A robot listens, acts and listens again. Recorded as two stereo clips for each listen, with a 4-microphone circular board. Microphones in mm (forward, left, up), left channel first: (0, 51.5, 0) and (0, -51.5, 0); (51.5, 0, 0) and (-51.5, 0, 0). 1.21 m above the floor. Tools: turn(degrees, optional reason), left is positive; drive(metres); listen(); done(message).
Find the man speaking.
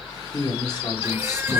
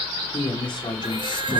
turn(degrees=40, reason="The man speaking: 40° left.")
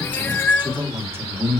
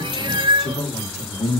turn(degrees=-25, reason="The man speaking is now 25° right.")
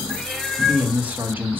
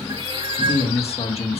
turn(degrees=-20, reason="The man speaking is now 20° right.")
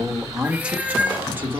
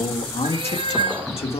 turn(degrees=-25, reason="The man speaking is now 25° right.")
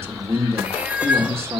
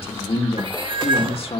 turn(degrees=-25, reason="The man speaking is now 25° right.")
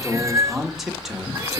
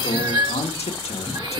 done("Found it: a man speaking, straight ahead, 1 to 2 m away.")